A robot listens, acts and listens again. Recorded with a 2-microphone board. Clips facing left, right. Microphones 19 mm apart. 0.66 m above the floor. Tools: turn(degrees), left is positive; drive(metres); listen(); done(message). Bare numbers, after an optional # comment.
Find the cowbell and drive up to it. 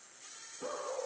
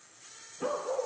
listen()
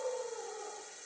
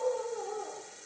listen()
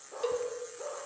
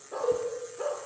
# The cowbell: about 45° left or 135° left.
turn(45)
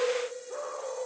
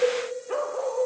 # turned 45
# So it is at 95° left.
turn(95)
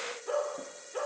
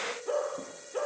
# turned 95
listen()
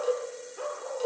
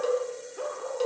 # The cowbell is now 20° right.
turn(-20)
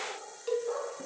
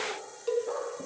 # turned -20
drive(1.0)
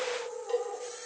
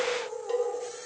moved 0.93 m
drive(1.0)
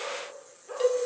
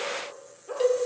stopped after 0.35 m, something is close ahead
done("Something is in my way. I am facing the cowbell but have not reached it.")